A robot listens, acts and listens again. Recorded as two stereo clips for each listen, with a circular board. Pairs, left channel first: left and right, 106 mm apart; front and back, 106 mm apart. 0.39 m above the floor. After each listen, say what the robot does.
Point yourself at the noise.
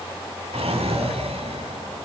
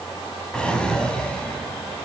Turn 80° right.
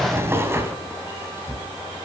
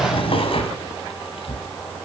Turn 25° right.
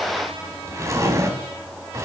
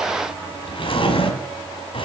Turn 30° right.
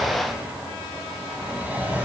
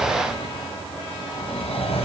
Turn 15° right.
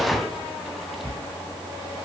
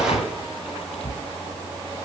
Facing the drawer, 1 to 2 m away.